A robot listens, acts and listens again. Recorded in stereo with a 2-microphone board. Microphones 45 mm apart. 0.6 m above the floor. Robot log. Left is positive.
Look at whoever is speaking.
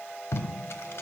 cmd idle
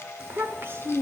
note: The child speaking: about 60° right or 120° right.
cmd yaw -60
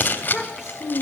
end: Facing the child speaking, 1 to 2 m away.